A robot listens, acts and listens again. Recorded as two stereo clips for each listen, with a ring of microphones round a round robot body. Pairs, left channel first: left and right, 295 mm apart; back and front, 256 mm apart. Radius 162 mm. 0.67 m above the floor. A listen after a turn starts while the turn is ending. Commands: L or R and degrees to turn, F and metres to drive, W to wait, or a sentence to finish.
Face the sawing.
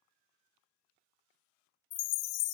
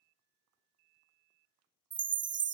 W
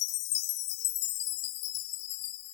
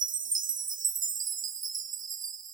W
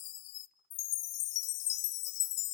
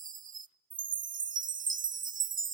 I can't make out sawing, only a chime.